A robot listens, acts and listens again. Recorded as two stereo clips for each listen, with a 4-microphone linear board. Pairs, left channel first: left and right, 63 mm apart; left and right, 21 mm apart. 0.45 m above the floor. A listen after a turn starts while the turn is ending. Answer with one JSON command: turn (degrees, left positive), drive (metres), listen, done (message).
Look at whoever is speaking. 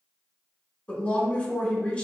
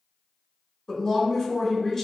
{"turn": 20}
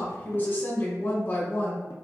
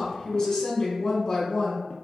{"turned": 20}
{"turn": 140}
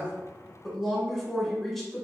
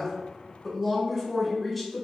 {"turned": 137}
{"done": "Found it: a woman speaking, straight ahead."}